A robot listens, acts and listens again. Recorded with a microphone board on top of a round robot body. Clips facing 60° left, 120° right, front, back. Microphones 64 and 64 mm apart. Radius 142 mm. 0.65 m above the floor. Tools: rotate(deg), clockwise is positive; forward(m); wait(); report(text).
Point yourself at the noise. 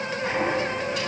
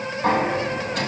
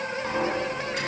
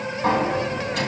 rotate(160)
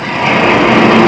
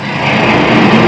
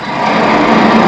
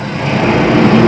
rotate(30)
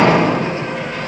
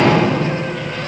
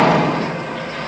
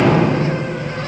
rotate(10)
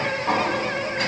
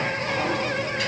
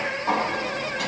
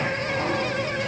report("Found it: a sliding door, straight ahead.")